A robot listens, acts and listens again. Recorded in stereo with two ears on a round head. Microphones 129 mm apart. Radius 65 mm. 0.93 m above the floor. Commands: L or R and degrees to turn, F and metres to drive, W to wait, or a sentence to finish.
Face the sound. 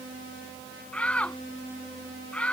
L30
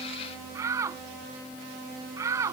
R20
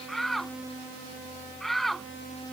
Found it: a shout, straight ahead.